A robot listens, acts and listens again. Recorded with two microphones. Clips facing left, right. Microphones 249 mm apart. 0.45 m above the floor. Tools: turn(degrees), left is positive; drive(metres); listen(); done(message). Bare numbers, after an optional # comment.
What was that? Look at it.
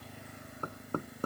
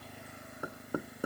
turn(-30)
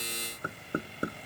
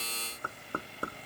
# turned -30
# So it is at 20° left.
turn(20)
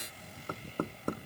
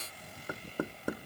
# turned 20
done("Found it: knocking, straight ahead.")